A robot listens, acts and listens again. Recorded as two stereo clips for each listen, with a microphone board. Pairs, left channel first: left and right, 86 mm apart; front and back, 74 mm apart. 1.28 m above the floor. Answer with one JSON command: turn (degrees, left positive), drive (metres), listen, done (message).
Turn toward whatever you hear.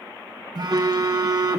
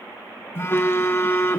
{"turn": -55}
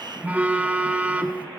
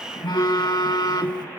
{"turn": -20}
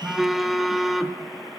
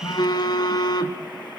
{"done": "Facing the phone buzzing, 1 to 2 m away."}